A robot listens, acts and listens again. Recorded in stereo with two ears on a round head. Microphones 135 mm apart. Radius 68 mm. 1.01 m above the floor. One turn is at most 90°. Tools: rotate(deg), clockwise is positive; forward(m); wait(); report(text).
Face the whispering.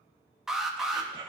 rotate(35)
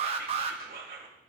rotate(90)
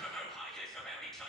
report("Facing the whispering.")